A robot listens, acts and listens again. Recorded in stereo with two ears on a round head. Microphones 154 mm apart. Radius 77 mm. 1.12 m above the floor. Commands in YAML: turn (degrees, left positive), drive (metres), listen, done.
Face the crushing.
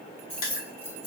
turn: 55
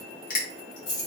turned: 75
turn: 50
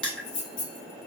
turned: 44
done: "Facing the crushing."